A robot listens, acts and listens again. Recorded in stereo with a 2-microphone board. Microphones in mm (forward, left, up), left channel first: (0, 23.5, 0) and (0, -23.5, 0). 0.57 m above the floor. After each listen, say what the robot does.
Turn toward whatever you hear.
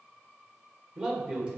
Turn 20° right.
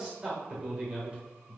Turn 30° right.
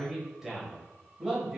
Turn 30° right.
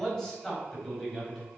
Facing the man speaking.